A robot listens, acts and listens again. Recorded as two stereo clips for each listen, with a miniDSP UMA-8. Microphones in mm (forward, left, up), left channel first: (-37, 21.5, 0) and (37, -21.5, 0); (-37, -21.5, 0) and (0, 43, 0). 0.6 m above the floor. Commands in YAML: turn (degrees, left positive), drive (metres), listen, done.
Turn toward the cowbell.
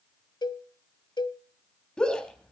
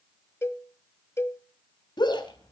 turn: -175
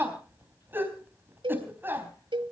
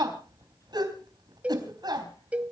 turn: -10
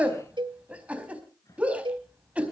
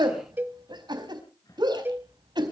done: "Found it: a cowbell, straight ahead."